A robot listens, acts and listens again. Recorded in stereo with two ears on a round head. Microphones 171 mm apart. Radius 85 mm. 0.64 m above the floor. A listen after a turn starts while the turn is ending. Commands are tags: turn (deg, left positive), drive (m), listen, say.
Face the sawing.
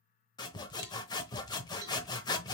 <turn deg="20"/>
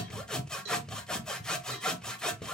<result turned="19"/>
<say>Found it: sawing, straight ahead.</say>